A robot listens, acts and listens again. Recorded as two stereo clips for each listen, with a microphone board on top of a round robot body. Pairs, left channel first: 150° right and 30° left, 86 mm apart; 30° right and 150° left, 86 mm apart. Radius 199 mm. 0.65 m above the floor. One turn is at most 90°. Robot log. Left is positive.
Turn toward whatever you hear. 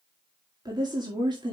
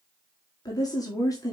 note: The woman speaking: 15° left.
cmd yaw +15
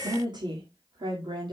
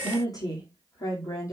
note: The woman speaking is now 20° left.
cmd yaw +20
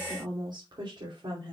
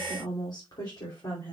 note: The woman speaking is now 10° left.
cmd yaw +10
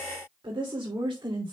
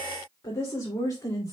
end: Found it: a woman speaking, straight ahead.